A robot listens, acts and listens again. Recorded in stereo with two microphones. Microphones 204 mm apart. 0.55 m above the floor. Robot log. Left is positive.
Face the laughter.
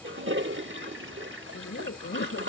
note: The laughter: about 70° left or 110° left.
cmd yaw +70
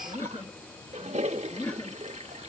end: Facing the laughter.